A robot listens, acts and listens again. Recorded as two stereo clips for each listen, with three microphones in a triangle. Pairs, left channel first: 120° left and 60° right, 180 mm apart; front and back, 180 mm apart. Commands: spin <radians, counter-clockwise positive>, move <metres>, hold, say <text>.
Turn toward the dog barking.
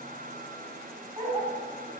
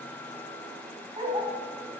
spin -2.09
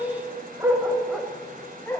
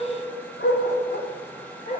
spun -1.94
spin 0.79
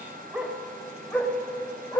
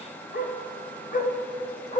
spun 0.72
spin 0.87
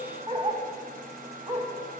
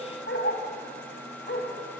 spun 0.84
say Facing the dog barking.